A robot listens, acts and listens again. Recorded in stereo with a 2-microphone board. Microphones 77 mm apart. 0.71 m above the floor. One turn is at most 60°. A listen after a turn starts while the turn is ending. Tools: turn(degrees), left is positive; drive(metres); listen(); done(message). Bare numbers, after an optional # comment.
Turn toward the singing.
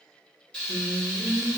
turn(60)
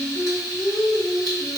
# So it is at 30° left.
turn(30)
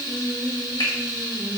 done("Found it: singing, straight ahead, under 1 m away.")